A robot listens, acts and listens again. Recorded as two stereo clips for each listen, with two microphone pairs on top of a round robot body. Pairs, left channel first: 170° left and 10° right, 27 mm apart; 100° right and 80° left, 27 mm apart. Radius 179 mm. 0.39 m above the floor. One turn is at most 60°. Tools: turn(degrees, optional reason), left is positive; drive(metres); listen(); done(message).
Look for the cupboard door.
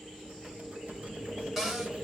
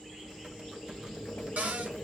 turn(degrees=60, reason="The cupboard door: 80° left.")
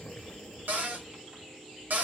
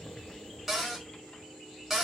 done("Found it: a cupboard door, straight ahead.")